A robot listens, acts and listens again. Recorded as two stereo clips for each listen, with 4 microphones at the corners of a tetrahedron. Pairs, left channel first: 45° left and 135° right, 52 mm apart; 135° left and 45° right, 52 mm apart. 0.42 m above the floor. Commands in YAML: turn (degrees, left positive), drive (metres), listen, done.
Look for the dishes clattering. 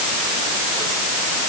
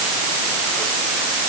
listen: true
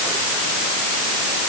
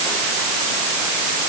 listen: true
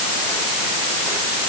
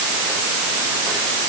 done: "I can't make out dishes clattering."